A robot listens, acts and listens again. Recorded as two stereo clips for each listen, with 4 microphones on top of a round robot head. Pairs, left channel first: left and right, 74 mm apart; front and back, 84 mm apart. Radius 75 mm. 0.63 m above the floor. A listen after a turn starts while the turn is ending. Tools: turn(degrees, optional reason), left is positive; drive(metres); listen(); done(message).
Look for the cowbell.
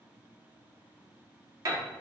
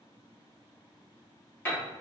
listen()
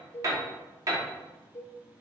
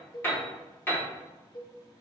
turn(degrees=35, reason="The cowbell: 35° left.")
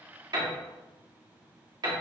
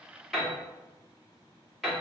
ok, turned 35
listen()
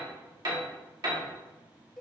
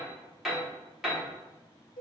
done("Found it: a cowbell, straight ahead, under 1 m away.")